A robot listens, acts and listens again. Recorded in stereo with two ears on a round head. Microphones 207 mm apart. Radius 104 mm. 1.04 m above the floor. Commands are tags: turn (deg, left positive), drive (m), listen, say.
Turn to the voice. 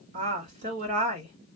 <turn deg="-40"/>
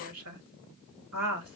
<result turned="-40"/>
<turn deg="-100"/>
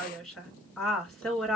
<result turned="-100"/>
<say>Facing the woman speaking.</say>